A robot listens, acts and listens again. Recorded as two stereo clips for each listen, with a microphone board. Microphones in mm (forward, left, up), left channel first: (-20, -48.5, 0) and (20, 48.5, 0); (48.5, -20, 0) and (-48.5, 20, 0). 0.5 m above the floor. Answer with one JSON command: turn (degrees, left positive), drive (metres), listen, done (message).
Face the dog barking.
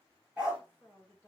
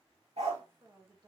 {"turn": 150}
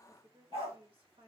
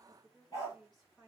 {"turn": 35}
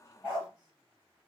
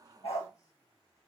{"done": "Found it: a dog barking, straight ahead, 2 to 4 m away."}